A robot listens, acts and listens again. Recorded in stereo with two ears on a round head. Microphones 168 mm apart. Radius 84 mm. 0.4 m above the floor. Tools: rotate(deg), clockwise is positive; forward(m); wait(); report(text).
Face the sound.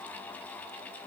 wait()
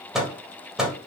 rotate(30)
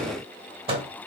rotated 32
rotate(145)
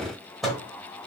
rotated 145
report("Found it: a microwave, straight ahead, 1 to 2 m away.")